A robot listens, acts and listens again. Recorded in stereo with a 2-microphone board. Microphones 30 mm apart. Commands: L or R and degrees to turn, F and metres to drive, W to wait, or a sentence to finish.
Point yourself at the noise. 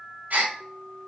R65
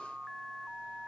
W
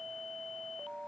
I heard a gasp, but can't make it out now. It was about straight ahead or 50° right.